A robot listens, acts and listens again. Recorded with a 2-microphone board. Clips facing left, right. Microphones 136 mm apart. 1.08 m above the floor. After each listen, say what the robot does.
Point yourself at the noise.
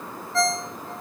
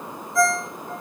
Turn 90° left.
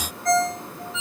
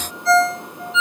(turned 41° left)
Turn 50° left.
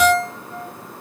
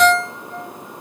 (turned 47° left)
Found it: a ringtone, straight ahead, over 4 m away.